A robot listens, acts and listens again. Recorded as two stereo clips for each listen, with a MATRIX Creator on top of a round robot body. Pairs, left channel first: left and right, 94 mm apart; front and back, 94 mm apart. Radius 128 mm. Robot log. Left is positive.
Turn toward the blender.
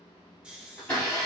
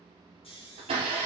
note: The blender: 165° left.
cmd yaw +165
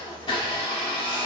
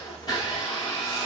note: The blender is now 45° left.
cmd yaw +45
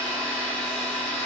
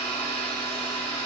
note: The blender is now 10° left.
cmd yaw +10
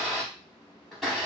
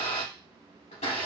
end: Found it: a blender, straight ahead.